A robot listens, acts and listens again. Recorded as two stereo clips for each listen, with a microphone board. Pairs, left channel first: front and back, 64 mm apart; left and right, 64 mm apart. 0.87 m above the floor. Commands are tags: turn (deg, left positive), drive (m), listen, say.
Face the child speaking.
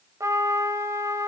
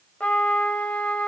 <listen/>
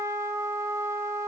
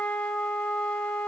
<listen/>
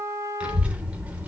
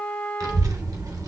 <turn deg="-115"/>
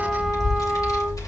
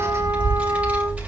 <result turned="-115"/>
<turn deg="-25"/>
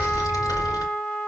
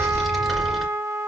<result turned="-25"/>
<say>Facing the child speaking.</say>